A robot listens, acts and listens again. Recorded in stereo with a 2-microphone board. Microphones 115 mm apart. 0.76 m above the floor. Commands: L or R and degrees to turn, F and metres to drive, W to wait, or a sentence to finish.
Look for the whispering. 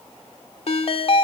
W
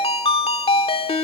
W
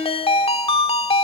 I can't make out whispering to turn to.